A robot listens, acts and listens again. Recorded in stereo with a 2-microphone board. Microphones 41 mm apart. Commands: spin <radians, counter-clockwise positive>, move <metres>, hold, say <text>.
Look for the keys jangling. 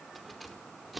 spin -0.52
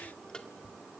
spin 0.26
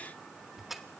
say Facing the keys jangling.